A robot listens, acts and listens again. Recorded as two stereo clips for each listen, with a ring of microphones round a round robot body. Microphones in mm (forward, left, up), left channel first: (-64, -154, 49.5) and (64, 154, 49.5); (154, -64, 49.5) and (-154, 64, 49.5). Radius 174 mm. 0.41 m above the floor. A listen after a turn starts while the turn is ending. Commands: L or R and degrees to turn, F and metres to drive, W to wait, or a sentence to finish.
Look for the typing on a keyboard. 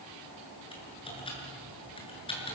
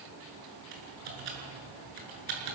L175
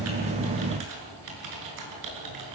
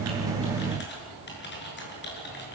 L35
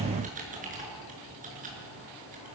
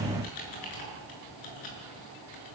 Facing the typing on a keyboard.